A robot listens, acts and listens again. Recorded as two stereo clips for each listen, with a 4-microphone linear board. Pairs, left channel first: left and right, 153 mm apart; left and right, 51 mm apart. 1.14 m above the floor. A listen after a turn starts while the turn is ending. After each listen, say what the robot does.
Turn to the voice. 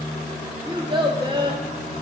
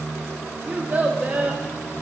Turn 30° right.
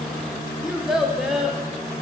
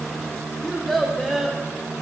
Found it: a child speaking, straight ahead.